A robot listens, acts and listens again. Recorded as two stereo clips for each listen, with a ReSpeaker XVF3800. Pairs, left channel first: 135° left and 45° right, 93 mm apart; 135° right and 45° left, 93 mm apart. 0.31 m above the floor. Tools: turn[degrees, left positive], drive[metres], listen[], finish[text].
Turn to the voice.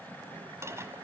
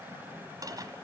Action: listen[]
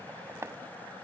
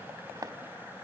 Action: listen[]
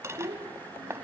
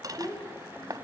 Thought: The child speaking: 80° right.
Action: turn[-80]
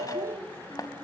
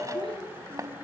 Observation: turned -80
Action: listen[]
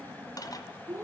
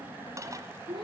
Thought: The child speaking is now 15° left.
Action: turn[15]
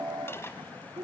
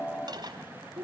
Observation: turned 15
Action: finish[Facing the child speaking.]